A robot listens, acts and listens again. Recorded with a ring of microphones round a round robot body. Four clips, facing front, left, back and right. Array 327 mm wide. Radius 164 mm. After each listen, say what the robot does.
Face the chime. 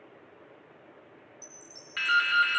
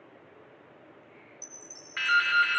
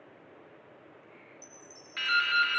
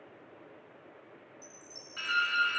Turn 20° left.
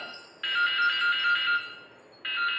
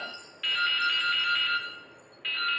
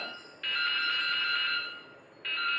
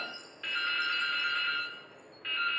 Facing the chime, 1 to 2 m away.